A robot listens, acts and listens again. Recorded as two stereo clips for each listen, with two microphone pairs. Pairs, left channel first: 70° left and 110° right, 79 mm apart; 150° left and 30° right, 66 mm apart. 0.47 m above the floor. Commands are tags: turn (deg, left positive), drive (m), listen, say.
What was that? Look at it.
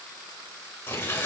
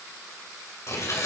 <turn deg="125"/>
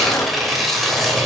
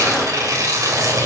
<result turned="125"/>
<turn deg="-20"/>
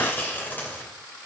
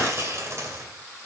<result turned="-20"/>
<turn deg="10"/>
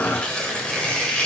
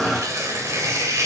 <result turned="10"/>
<say>Facing the tearing paper.</say>